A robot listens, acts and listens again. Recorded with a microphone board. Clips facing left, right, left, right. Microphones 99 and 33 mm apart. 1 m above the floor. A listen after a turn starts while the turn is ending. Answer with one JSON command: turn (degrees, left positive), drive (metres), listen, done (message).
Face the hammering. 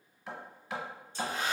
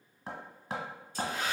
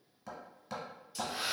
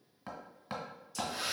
{"turn": -40}
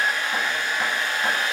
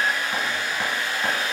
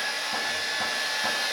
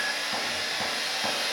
{"listen": true}
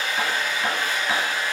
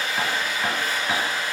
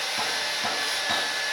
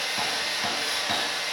{"listen": true}
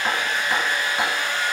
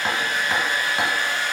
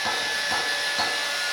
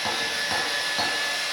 {"done": "I heard hammering, but can't make it out now. It was about straight ahead or 100° right."}